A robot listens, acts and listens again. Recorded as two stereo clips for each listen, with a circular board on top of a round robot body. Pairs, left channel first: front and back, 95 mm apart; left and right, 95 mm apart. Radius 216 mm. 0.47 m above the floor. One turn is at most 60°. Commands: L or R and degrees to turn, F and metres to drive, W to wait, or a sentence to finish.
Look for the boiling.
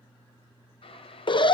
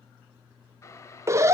L30
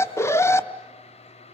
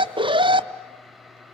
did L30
Facing the boiling, under 1 m away.